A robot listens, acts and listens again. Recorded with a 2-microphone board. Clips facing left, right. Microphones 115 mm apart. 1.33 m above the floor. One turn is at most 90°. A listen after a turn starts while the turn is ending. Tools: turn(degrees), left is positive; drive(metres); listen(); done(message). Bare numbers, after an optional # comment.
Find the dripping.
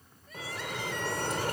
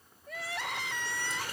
# The dripping: about 55° left or 125° left.
turn(55)
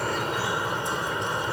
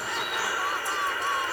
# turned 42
# So it is at 25° left.
turn(25)
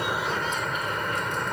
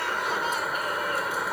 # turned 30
done("Facing the dripping.")